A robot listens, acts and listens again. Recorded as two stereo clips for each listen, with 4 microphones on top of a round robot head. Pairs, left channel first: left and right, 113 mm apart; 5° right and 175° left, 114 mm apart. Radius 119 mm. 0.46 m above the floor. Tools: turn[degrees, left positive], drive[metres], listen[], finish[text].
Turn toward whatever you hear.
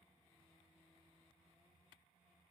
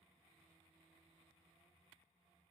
Action: listen[]
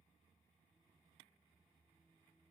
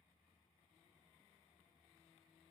Action: listen[]
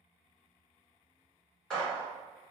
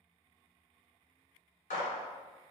Action: finish[Found it: a gunshot, straight ahead.]